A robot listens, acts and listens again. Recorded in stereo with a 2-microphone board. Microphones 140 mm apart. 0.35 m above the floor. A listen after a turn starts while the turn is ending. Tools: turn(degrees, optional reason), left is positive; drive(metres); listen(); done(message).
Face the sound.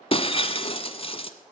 turn(degrees=40, reason="The breaking glass: about 40° left or 140° left.")
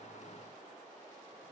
listen()
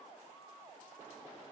done("I heard breaking glass, but can't make it out now. It was about straight ahead or 100° left.")